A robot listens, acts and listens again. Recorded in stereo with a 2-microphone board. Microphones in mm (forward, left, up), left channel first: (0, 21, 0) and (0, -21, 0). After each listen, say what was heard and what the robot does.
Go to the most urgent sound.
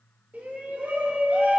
The shout: about 45° right or 135° right. Turn 45° right.
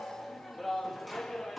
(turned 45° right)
Drive 1.0 m forward.
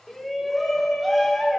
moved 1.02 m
Drive 1.0 m forward.
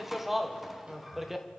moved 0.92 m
Drive 1.0 m forward.
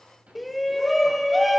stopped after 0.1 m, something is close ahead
I am next to the shout.